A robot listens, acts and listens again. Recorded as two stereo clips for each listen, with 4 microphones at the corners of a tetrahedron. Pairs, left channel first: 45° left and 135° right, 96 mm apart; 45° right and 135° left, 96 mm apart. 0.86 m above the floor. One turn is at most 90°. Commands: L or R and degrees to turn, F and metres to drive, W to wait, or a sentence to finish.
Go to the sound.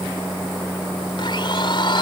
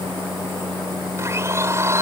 L75
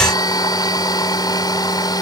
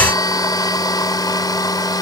F1.0
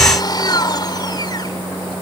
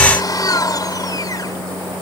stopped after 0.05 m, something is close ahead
Something is in my way. I am facing the blender but have not reached it.